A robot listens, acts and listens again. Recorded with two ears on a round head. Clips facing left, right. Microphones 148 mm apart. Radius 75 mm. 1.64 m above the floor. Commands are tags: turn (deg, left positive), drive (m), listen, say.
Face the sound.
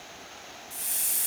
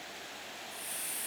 <turn deg="55"/>
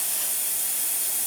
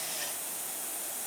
<turn deg="70"/>
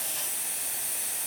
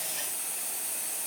<say>Facing the hiss.</say>